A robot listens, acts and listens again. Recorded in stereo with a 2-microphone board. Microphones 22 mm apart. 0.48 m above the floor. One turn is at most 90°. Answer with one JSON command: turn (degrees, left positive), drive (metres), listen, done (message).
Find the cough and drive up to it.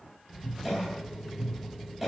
{"turn": -30}
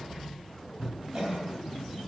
{"turn": -90}
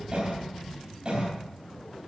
{"turn": -40}
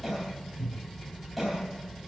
{"drive": 1.0}
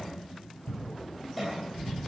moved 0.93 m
{"drive": 1.0}
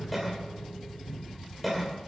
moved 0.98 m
{"drive": 1.0}
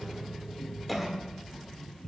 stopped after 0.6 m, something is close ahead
{"done": "I am next to the cough."}